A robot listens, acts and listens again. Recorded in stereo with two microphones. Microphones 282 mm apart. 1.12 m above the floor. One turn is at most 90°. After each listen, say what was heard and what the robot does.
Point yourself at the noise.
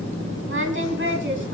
The singing: about 40° right or 140° right. Turn 40° right.
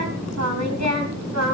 So it is at 110° right. Turn 90° right.
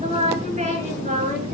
The singing is now 30° right. Turn 30° right.
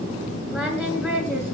Facing the singing, over 4 m away.